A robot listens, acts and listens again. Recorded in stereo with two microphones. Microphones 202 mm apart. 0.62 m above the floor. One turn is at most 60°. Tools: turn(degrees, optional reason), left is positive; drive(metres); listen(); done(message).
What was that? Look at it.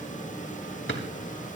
turn(degrees=60)
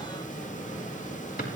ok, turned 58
turn(degrees=45, reason="So it is at 45° left.")
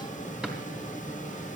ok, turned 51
listen()
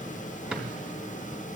done("Facing the drawer, 2 to 4 m away.")